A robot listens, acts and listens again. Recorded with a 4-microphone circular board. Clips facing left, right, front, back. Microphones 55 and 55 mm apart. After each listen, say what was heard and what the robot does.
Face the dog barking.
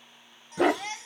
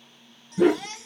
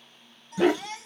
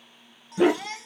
The dog barking: 100° left. Turn 100° left.
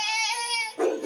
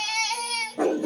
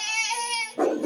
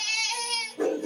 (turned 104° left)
Found it: a dog barking, straight ahead, 1 to 2 m away.